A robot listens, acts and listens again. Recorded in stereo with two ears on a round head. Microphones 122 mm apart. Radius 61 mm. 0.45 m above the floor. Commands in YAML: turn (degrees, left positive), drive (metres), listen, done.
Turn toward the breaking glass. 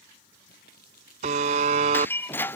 turn: 15
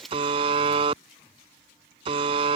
done: "Found it: breaking glass, straight ahead."